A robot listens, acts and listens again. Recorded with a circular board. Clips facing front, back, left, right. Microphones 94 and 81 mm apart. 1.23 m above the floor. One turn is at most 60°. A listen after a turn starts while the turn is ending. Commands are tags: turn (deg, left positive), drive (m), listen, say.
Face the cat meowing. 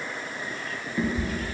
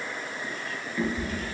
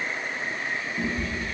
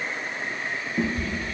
<turn deg="-60"/>
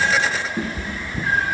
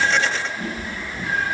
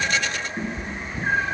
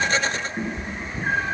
<say>Found it: a cat meowing, straight ahead, 1 to 2 m away.</say>